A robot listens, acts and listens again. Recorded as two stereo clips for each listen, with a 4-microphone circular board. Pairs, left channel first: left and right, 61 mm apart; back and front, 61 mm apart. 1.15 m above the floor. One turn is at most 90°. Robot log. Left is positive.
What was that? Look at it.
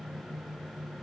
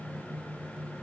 cmd idle
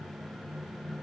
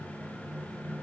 cmd idle
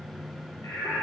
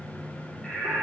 note: The singing: 100° left.
cmd yaw +90
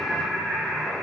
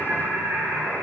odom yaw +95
end: Facing the singing.